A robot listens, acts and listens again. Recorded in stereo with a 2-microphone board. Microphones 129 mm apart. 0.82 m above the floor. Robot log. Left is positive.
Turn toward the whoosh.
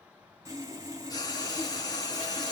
cmd idle
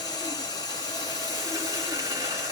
cmd idle
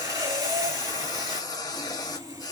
end: I can't make out a whoosh, only frying and sawing.